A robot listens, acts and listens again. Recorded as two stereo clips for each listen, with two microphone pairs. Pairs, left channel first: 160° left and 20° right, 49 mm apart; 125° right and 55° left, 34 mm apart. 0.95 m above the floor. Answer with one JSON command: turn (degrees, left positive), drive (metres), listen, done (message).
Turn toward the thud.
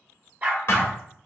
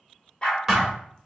{"turn": 135}
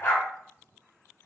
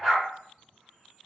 {"done": "Facing where the thud came from. I can't hear it now."}